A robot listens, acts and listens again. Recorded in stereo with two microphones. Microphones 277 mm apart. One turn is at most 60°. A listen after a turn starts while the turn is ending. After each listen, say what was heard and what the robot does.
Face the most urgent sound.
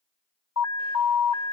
Turn 60° left.
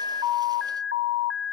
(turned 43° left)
So it is at 50° left. Turn 50° left.
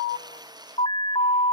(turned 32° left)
The alarm is now 20° left. Turn 20° left.
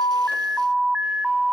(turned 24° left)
Facing the alarm, under 1 m away.